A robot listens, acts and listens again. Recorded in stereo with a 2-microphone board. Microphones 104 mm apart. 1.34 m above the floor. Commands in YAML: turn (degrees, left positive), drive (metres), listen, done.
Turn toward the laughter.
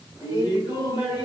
turn: 40
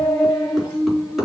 done: "Facing the laughter, 2 to 4 m away."